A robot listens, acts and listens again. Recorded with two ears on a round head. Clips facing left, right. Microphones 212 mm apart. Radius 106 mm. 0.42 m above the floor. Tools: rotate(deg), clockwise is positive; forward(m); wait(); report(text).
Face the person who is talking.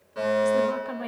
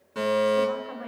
rotate(-55)
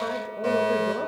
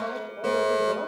wait()
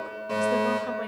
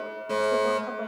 wait()
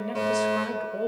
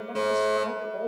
rotate(-45)
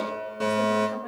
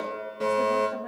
wait()
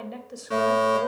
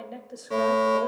report("Found it: a woman speaking, straight ahead, 1 to 2 m away.")